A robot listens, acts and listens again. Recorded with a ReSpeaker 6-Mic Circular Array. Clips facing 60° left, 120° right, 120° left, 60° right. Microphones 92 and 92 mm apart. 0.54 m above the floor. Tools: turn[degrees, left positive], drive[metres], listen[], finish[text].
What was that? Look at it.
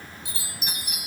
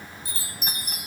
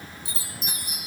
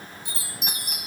Thought: The chime: 75° right.
Action: turn[-75]
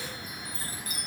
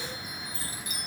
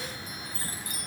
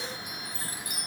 Thought: The chime is now 15° left.
Action: turn[15]
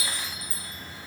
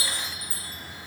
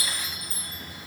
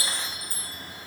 Action: finish[Found it: a chime, straight ahead, 1 to 2 m away.]